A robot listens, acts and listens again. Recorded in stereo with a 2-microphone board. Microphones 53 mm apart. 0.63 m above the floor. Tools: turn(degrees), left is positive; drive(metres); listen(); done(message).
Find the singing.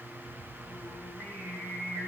turn(degrees=15)
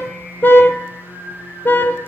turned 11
turn(degrees=25)
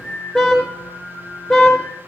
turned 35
turn(degrees=120)
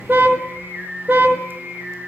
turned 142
turn(degrees=-25)
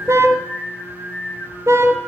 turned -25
done("Facing the singing.")